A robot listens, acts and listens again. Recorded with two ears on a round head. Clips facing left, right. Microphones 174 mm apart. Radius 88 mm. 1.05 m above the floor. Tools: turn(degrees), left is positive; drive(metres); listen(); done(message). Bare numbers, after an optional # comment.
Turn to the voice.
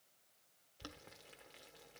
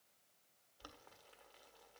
listen()
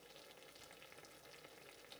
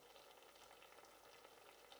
listen()
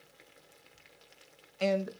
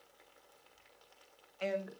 # The man speaking: about 50° left or 130° left.
turn(50)
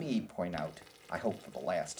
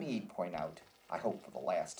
# So it is at 10° left.
turn(10)
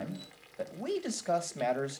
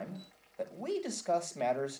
done("Found it: a man speaking, straight ahead, 1 to 2 m away.")